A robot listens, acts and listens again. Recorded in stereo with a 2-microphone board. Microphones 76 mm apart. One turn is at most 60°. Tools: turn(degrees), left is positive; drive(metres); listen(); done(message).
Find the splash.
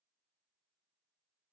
listen()
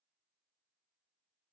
listen()
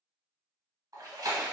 turn(degrees=-55)
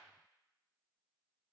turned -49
listen()
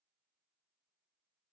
done("I heard a splash, but can't make it out now. It was about 5° right or 80° right.")